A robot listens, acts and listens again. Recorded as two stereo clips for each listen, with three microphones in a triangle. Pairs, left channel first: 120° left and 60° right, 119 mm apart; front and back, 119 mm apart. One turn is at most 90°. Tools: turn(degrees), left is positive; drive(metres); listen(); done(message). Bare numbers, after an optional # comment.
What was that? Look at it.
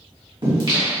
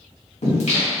# The singing: 15° right.
turn(-15)
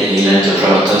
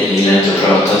done("Facing the singing.")